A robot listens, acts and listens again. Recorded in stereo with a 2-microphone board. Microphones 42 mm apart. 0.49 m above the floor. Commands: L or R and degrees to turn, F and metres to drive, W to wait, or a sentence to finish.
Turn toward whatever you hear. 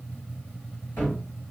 L65
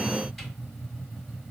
W
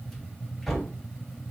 Facing the cupboard door, 1 to 2 m away.